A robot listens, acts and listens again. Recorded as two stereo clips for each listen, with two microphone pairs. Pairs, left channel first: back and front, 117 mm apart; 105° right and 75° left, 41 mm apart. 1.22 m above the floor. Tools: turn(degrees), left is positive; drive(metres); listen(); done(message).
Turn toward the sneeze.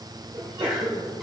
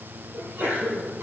turn(degrees=45)
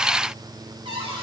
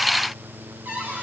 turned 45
done("I heard a sneeze from this way, but can't make it out now.")